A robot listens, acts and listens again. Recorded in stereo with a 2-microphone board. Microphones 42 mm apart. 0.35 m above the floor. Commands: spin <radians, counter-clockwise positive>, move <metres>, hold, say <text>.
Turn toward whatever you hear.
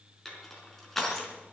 spin 0.52
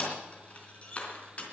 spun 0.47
spin 2.53
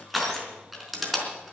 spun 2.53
say Found it: crushing, straight ahead, 2 to 4 m away.